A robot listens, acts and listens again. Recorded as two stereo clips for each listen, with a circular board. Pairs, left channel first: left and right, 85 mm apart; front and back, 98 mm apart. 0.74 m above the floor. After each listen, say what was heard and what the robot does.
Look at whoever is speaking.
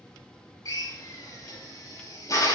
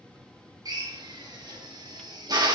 Keep listening.
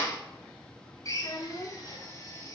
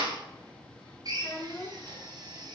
The child speaking: 60° left. Turn 60° left.
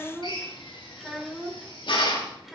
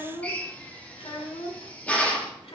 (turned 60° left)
Facing the child speaking.